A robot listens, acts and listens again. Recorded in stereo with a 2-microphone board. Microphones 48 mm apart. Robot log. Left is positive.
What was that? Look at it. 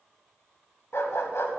note: The dog barking: about 70° left or 110° left.
cmd yaw +70
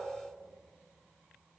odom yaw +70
cmd idle
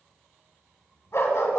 note: So it is at 75° left.
cmd yaw +75
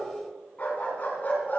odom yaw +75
note: The dog barking is now 45° left.
cmd yaw +45
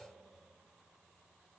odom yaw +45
cmd idle
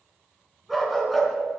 end: Found it: a dog barking, straight ahead.